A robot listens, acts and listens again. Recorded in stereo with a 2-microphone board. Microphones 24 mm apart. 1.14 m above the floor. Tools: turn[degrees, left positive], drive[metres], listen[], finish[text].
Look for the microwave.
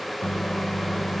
Thought: The microwave: about 20° left or 160° left.
Action: turn[20]
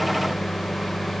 Thought: So it is at 140° left.
Action: turn[140]
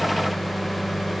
Action: finish[Facing the microwave, under 1 m away.]